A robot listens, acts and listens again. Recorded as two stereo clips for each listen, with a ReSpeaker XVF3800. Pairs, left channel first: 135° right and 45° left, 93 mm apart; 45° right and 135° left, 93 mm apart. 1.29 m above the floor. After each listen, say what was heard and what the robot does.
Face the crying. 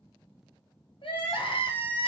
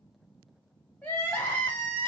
The crying: 115° right. Turn 115° right.
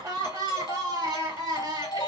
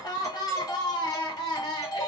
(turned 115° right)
Found it: crying, straight ahead.